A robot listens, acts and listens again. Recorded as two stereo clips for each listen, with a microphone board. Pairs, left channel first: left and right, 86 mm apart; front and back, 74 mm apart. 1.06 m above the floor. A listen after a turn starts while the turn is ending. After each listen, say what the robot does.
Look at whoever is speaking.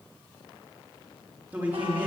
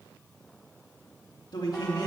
Turn 20° right.
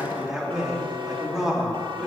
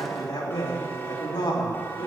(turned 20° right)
Facing the man speaking.